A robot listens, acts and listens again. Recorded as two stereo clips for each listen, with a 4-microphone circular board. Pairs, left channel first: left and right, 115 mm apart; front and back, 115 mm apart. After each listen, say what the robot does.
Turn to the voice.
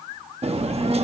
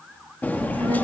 Turn 135° right.
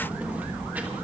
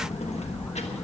Turn 15° right.
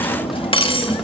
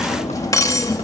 Facing the child speaking.